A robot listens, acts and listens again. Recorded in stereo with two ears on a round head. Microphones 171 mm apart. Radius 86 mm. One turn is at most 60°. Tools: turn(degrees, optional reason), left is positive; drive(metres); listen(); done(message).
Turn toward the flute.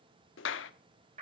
listen()
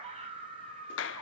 listen()
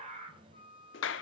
turn(degrees=30, reason="The flute: about 30° left or 150° left.")
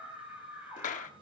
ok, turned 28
listen()
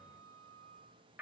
done("Found it: a flute, straight ahead.")